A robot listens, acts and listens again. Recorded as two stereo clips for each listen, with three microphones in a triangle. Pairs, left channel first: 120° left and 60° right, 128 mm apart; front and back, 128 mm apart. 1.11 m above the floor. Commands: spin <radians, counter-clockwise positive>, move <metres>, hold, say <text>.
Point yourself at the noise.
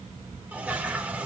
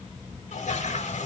spin 0.35
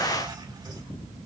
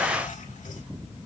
say Facing the toilet flushing, 2 to 4 m away.